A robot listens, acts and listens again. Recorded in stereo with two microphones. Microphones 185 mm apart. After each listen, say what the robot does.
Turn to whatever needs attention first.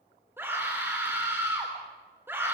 Turn 30° right.
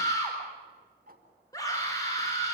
Turn 20° left.
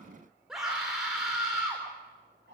Found it: a scream, straight ahead, over 4 m away.